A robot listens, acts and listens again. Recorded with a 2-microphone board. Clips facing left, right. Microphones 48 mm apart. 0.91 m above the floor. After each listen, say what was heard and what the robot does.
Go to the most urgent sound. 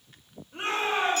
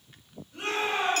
The shout: about 35° left or 145° left. Turn 35° left.
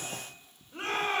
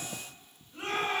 So it is at 105° left. Turn 105° left.
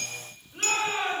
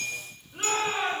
Drive 1.0 m forward.
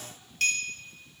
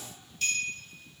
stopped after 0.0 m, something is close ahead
Keep listening.
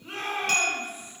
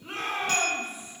Blocked. The shout is further on, straight ahead.